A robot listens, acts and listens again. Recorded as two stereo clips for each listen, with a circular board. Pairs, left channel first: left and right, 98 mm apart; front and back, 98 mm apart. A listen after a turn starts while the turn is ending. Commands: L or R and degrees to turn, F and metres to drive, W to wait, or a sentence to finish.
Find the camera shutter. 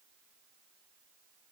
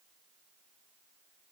W
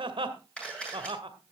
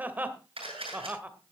L170
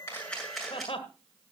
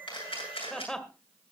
Found it: a camera shutter, straight ahead, over 4 m away.